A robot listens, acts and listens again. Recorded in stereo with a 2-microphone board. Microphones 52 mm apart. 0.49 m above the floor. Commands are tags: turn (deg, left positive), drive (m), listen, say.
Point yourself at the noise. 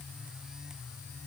<listen/>
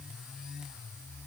<listen/>
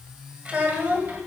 <turn deg="-35"/>
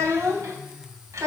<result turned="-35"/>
<turn deg="-105"/>
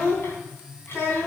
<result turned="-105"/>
<turn deg="50"/>
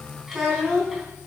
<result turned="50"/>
<say>Found it: a child speaking, straight ahead.</say>